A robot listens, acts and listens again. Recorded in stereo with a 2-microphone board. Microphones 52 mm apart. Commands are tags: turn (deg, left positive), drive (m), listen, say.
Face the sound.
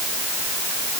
<listen/>
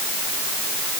<listen/>
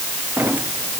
<turn deg="-35"/>
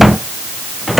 <say>Found it: a drawer, straight ahead.</say>